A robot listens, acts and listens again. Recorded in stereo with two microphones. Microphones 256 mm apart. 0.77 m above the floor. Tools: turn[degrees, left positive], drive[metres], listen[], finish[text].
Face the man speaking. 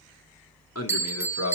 Thought: The man speaking: about 75° left or 105° left.
Action: turn[75]
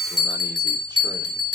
Action: listen[]
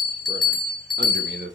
Thought: So it is at 45° right.
Action: turn[-45]
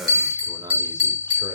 Thought: The man speaking is now 15° right.
Action: turn[-15]
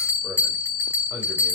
Action: listen[]
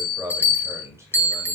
Thought: The man speaking is now 10° right.
Action: turn[-10]
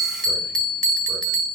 Action: listen[]
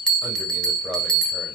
Action: listen[]
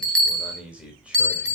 Action: finish[Facing the man speaking, 2 to 4 m away.]